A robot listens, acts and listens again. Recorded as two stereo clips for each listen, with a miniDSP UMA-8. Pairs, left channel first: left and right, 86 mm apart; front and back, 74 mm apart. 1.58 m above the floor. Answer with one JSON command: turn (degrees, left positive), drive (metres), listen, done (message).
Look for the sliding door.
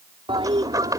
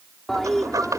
{"turn": -135}
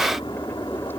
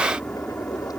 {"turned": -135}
{"listen": true}
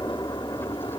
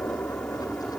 {"listen": true}
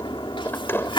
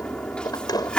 {"turn": 25}
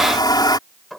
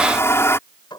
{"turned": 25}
{"done": "Facing the sliding door."}